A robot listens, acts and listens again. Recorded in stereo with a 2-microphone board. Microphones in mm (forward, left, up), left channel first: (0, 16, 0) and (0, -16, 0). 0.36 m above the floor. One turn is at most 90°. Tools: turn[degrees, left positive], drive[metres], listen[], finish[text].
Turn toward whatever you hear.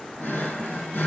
Action: turn[90]
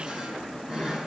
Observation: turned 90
Thought: So it is at 15° right.
Action: turn[-15]
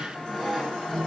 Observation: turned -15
Action: finish[Found it: a drawer, straight ahead, over 4 m away.]